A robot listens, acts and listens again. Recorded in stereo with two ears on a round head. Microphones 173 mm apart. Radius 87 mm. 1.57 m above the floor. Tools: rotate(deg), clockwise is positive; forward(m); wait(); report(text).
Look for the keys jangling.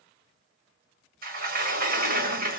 wait()
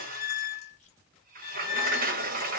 wait()
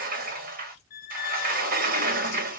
rotate(-35)
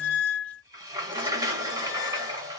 wait()
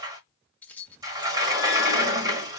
rotate(-10)
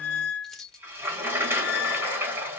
report("Facing the keys jangling.")